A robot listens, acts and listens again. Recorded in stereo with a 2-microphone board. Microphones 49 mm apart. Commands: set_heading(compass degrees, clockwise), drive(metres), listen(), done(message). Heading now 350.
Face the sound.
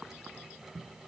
listen()
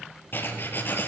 set_heading(300)
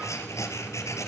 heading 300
set_heading(215)
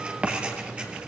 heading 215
set_heading(240)
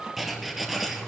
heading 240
done("Facing the writing, 2 to 4 m away.")